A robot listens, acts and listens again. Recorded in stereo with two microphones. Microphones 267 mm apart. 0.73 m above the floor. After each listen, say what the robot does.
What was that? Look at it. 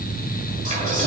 Turn 30° right.
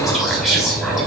Facing the whispering.